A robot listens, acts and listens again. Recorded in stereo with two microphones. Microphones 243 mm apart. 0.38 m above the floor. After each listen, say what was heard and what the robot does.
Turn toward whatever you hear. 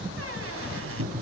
The squeak: about 70° right or 110° right. Turn 70° right.
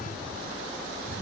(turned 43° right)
Keep listening.
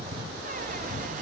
Keep listening.
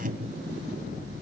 So it is at 40° right. Turn 40° right.
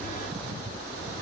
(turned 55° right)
Nothing new. It was at 15° left. Turn 15° left.
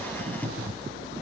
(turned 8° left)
The squeak is now 10° left. Turn 10° left.
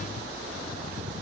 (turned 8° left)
Keep listening.
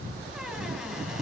Facing the squeak, 2 to 4 m away.